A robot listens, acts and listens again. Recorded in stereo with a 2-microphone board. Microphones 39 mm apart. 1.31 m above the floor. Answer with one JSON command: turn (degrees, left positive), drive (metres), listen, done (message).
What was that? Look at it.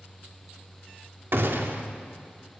{"turn": -65}
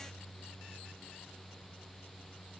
{"listen": true}
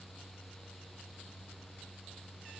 {"done": "I heard a gunshot, but can't make it out now. It was about straight ahead or 50° right."}